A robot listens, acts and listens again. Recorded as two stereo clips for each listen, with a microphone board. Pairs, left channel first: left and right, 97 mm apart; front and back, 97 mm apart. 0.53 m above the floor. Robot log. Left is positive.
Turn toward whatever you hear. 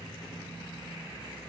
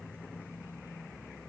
cmd idle
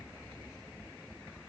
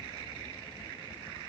cmd idle
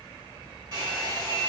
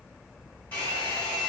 note: The hair dryer: 70° right.
cmd yaw -70
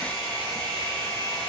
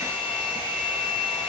end: Facing the hair dryer.